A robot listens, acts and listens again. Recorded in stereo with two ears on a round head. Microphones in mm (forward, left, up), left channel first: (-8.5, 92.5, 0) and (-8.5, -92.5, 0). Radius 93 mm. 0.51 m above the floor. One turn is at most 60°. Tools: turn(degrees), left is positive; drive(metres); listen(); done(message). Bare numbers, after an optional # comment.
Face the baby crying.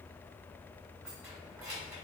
listen()
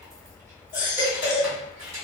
# The baby crying: about 40° left or 140° left.
turn(40)
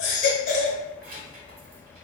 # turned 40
# So it is at 100° left.
turn(60)
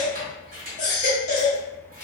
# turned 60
# The baby crying is now 35° left.
turn(35)
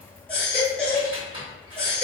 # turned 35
done("Found it: a baby crying, straight ahead, 1 to 2 m away.")